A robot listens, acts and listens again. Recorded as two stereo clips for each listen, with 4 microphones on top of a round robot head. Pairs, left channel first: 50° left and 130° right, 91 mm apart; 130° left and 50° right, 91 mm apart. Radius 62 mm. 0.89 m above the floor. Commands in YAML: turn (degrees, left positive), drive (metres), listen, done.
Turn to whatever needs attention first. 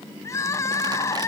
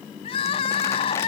turn: 110
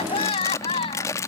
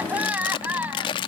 turn: 25
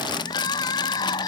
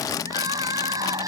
done: "Facing the crying."